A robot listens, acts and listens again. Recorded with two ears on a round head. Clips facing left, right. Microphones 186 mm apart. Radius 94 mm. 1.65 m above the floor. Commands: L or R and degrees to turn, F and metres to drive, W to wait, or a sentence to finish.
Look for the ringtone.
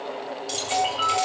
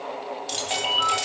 R55
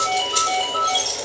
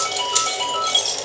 R70
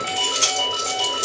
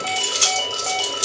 R10
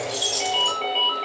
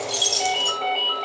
Found it: a ringtone, straight ahead, 2 to 4 m away.